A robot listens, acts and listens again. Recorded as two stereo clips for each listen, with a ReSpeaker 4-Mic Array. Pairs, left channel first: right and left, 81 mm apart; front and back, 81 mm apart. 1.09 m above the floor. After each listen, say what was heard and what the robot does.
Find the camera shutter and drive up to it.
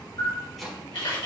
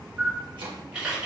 The camera shutter: 100° right. Turn 100° right.
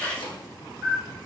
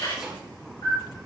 The camera shutter is now 20° right. Turn 20° right.
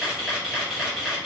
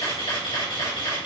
Drive 1.0 m forward.
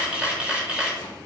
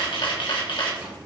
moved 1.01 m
The camera shutter is now 15° left. Turn 15° left.
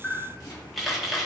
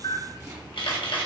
Drive 1.0 m forward.
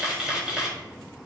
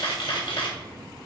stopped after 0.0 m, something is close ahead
The camera shutter is now 10° left. Turn 10° left.
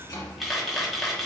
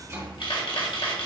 Arrived at the camera shutter, straight ahead.